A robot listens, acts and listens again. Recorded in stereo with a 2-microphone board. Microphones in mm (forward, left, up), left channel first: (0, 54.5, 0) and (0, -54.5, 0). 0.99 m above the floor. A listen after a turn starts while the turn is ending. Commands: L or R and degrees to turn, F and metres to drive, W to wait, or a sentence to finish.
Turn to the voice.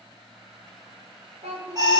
R65
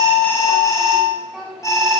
Facing the child speaking, over 4 m away.